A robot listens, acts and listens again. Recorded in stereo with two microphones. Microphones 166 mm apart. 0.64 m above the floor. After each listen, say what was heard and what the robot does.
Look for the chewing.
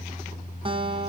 Keep listening.
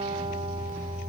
Keep listening.
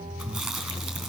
Turn 30° left.
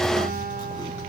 Keep listening.
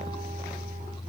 Keep listening.
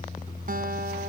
I heard chewing, but can't make it out now. It was about 30° right or 150° left.